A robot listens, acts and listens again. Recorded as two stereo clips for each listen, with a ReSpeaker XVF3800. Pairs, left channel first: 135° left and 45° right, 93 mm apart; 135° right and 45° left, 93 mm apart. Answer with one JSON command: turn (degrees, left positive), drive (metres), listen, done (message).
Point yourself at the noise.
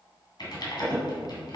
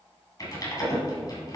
{"turn": 175}
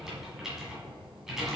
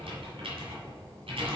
{"turn": 40}
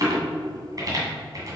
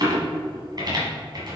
{"done": "Found it: typing on a keyboard, straight ahead."}